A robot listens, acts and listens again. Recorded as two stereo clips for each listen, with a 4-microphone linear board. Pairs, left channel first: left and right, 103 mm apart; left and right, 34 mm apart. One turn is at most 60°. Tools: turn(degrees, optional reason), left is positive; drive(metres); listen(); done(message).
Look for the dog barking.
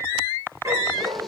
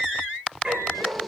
turn(degrees=-35, reason="The dog barking: about 35° right or 145° right.")
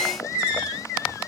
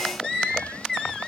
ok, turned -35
listen()
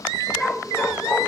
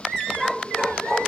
done("Found it: a dog barking, straight ahead, over 4 m away.")